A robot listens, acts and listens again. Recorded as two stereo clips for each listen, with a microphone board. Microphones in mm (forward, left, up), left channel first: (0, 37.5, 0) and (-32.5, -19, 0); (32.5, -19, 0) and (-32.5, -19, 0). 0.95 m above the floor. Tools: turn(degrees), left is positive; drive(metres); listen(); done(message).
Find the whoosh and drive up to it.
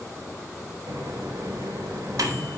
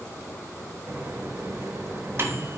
listen()
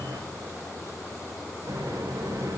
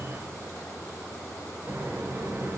listen()
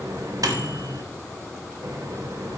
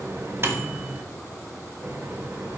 done("I can't make out a whoosh to turn to.")